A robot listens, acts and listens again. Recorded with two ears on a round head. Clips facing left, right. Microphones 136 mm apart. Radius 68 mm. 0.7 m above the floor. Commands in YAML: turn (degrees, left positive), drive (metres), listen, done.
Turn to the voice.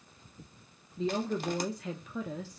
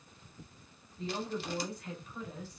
turn: 60
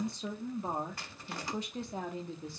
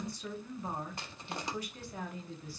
turn: 25
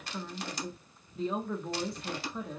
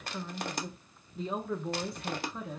done: "Facing the woman speaking."